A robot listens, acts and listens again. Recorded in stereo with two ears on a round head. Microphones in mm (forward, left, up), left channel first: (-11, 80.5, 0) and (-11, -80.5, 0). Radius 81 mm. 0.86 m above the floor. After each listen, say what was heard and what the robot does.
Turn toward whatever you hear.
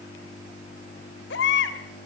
The baby crying: about 75° left or 105° left. Turn 75° left.
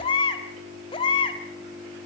So it is at 30° left. Turn 30° left.
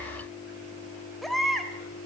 Found it: a baby crying, straight ahead.